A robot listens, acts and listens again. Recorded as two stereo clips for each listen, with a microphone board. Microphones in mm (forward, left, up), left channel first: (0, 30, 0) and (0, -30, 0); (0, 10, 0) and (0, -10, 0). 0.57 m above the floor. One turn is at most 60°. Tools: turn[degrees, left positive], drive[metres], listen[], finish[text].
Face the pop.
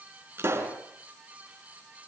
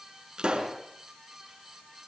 Thought: The pop: about 40° right or 140° right.
Action: turn[-40]
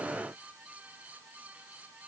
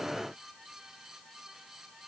Action: listen[]
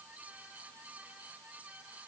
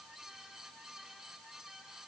Action: finish[I heard a pop, but can't make it out now. It was about straight ahead or 100° right.]